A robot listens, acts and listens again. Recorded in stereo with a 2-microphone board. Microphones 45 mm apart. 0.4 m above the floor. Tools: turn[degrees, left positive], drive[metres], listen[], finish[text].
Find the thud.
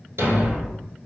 Action: turn[-90]
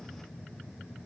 Action: finish[Facing where the thud came from. I can't hear it now.]